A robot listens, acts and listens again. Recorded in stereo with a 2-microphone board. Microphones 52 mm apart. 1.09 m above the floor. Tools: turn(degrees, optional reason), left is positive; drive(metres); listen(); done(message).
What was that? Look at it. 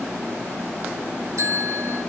turn(degrees=-90)
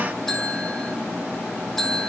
turn(degrees=10, reason="So it is at 10° left.")
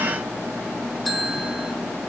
done("Facing the bell, 2 to 4 m away.")